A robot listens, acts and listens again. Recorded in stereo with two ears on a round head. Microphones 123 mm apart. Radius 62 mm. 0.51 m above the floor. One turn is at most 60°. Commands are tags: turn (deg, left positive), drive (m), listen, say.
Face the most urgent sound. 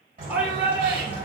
<turn deg="-30"/>
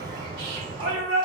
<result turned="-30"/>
<turn deg="-60"/>
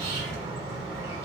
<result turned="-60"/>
<turn deg="-60"/>
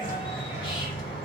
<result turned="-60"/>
<turn deg="-20"/>
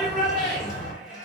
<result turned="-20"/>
<say>Found it: a shout, straight ahead, 1 to 2 m away.</say>